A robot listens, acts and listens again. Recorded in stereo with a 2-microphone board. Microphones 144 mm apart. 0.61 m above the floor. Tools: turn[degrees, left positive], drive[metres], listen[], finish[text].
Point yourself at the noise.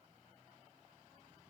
Action: listen[]
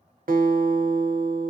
Action: turn[-90]
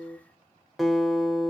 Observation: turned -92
Action: finish[Found it: a guitar, straight ahead.]